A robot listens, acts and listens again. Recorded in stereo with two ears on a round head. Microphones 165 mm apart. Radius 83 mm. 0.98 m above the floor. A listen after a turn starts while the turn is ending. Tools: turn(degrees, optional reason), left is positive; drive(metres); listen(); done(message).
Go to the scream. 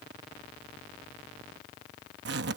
listen()
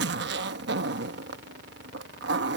listen()
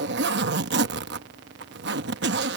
done("I can't make out a scream, only a zipper.")